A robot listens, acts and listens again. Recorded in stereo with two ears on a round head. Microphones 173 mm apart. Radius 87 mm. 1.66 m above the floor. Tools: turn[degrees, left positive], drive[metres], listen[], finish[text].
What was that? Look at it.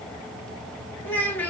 Action: turn[30]
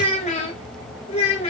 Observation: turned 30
Thought: So it is at 145° left.
Action: turn[145]
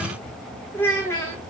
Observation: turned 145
Thought: The child speaking is now 15° left.
Action: turn[15]
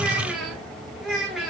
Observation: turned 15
Action: finish[Facing the child speaking.]